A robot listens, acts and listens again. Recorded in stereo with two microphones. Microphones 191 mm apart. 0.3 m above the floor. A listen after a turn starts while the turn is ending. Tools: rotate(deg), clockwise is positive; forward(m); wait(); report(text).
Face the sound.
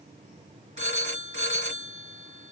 rotate(35)
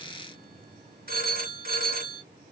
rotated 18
rotate(130)
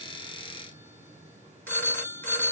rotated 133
rotate(-10)
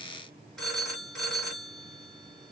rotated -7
report("Found it: a phone ringing, straight ahead.")